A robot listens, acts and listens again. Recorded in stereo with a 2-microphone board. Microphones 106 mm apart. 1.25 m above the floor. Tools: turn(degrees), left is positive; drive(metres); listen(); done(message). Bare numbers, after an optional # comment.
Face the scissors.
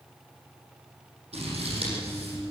# The scissors: about 70° right or 110° right.
turn(-70)
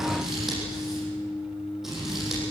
done("Facing the scissors, over 4 m away.")